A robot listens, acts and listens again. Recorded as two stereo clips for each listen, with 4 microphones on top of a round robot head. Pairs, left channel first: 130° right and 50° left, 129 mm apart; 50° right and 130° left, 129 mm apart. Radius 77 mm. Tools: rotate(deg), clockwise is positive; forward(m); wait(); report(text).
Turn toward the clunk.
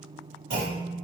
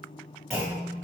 rotate(-40)
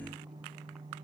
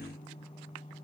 report("I heard a clunk from this way, but can't make it out now.")